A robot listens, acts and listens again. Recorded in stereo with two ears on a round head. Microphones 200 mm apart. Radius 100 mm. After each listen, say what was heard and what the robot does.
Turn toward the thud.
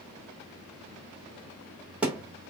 Turn 30° right.
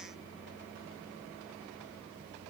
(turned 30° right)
Keep listening.
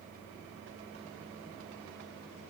I heard a thud, but can't make it out now. It was about 25° left or 145° right.